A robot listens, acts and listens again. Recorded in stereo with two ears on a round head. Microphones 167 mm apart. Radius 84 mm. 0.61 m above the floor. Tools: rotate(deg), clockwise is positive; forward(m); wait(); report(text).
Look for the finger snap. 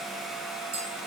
wait()
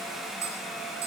wait()
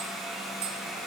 report("I can't make out a finger snap to turn to.")